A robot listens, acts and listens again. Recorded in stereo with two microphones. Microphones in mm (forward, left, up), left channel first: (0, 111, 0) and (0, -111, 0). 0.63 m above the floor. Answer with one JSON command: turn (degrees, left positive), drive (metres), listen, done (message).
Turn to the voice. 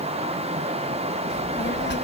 {"turn": 55}
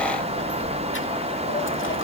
{"turn": 65}
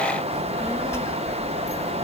{"turn": 15}
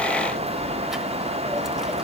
{"done": "Facing the child speaking."}